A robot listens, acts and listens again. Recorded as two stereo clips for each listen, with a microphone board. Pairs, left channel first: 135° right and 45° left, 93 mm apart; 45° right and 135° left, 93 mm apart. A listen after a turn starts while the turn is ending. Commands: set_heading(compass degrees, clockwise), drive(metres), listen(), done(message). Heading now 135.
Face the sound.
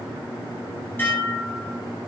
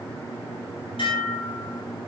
set_heading(200)
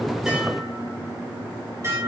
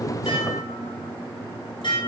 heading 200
set_heading(215)
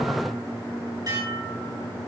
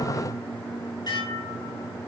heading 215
done("Facing the dishes clattering, over 4 m away.")